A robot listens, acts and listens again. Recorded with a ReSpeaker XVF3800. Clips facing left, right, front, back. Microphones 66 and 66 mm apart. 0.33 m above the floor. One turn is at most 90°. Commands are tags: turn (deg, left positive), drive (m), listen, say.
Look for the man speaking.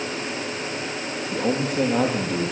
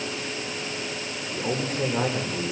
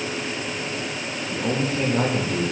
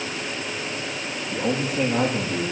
<turn deg="90"/>
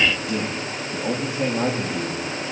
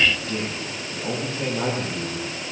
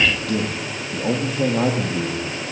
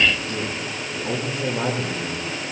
<turn deg="20"/>
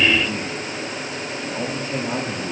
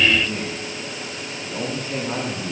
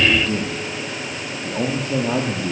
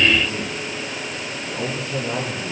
<say>Facing the man speaking.</say>